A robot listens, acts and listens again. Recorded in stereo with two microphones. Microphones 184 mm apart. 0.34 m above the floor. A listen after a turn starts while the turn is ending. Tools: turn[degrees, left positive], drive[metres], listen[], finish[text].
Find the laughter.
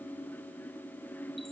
Action: listen[]
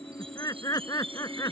Thought: The laughter: about 20° left or 160° left.
Action: turn[20]
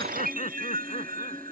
Thought: The laughter: about 40° left or 140° left.
Action: turn[40]
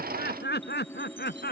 Thought: So it is at 115° left.
Action: turn[115]
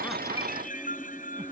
Action: listen[]
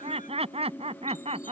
Thought: The laughter is now 35° right.
Action: turn[-35]
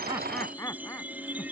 Thought: The laughter is now 15° left.
Action: turn[15]
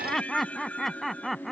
Action: finish[Facing the laughter.]